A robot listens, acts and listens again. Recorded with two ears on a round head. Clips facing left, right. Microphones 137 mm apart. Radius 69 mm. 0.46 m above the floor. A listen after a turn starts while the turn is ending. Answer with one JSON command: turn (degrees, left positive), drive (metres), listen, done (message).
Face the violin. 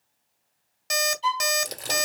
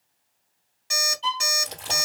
{"turn": 30}
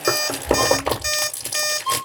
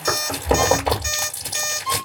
{"turn": -15}
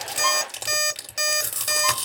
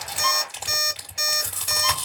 {"listen": true}
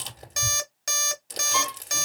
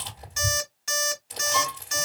{"listen": true}
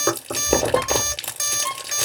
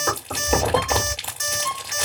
{"done": "Found it: a violin, straight ahead."}